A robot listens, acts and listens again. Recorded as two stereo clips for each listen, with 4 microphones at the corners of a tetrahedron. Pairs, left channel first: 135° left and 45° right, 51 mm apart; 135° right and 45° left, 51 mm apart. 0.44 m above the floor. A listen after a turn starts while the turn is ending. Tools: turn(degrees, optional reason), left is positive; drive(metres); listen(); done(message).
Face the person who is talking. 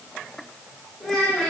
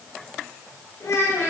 turn(degrees=-140, reason="The child speaking: 140° right.")
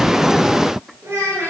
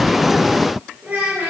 turn(degrees=-15, reason="The child speaking is now 15° right.")
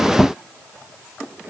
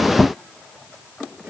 listen()
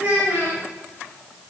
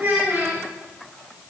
done("Facing the child speaking, 2 to 4 m away.")